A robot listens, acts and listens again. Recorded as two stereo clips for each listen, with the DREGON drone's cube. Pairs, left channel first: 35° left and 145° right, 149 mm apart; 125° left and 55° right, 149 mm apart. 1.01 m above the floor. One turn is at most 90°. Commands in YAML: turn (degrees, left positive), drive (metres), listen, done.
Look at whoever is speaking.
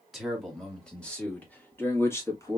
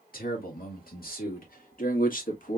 turn: 90
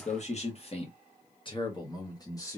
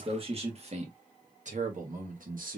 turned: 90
turn: -35
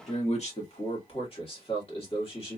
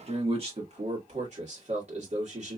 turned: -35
turn: -15
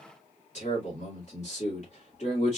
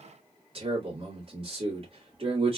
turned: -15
done: "Facing the man speaking."